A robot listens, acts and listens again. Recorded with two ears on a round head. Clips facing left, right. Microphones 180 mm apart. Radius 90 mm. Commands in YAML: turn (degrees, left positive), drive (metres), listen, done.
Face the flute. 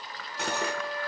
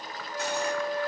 turn: -25
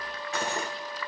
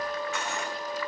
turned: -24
turn: -125
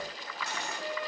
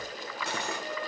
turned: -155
turn: 30
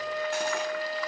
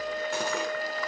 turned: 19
turn: 10
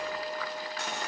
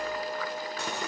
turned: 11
done: "Found it: a flute, straight ahead."